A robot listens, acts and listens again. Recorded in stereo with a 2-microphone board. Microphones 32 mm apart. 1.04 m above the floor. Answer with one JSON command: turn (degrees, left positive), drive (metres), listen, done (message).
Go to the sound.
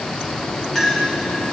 {"turn": 30}
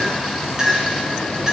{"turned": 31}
{"turn": -20}
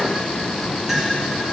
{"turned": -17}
{"listen": true}
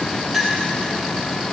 {"drive": 1.0}
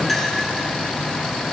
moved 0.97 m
{"listen": true}
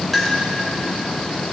{"drive": 1.0}
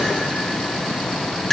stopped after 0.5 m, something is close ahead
{"turn": 10}
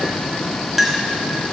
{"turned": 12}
{"done": "Arrived at the clink, straight ahead."}